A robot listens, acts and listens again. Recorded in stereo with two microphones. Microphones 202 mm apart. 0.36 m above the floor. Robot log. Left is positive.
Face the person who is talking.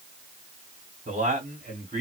note: The man speaking: about 40° right or 140° right.
cmd yaw -40
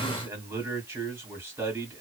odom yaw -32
note: So it is at 15° right.
cmd yaw -15
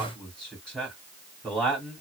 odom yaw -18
end: Found it: a man speaking, straight ahead, 1 to 2 m away.